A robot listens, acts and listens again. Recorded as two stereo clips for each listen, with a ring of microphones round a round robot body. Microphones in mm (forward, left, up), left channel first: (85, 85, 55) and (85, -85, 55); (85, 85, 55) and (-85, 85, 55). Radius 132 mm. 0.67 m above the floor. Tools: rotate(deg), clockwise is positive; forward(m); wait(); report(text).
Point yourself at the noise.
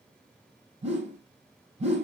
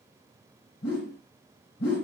rotate(40)
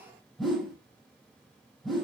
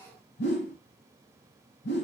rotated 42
report("Found it: a whoosh, straight ahead, over 4 m away.")